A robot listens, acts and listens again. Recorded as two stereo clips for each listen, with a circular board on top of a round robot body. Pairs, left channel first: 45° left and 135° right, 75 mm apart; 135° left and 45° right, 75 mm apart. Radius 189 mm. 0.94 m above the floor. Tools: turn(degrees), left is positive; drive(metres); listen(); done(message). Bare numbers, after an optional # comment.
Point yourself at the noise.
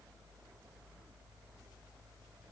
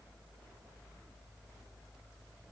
listen()
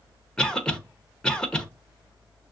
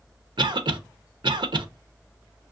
# The cough: 35° right.
turn(-35)
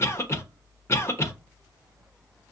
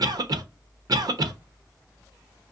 # The cough is now 10° right.
turn(-10)
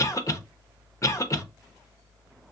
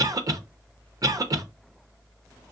done("Found it: a cough, straight ahead, under 1 m away.")